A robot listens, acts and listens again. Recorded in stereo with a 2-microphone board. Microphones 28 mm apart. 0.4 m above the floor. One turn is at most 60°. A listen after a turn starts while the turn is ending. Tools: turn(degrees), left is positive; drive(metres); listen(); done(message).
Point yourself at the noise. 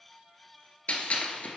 turn(degrees=60)
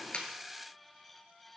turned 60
listen()
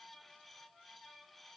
done("I heard a gunshot, but can't make it out now. It was about 5° left or 55° left.")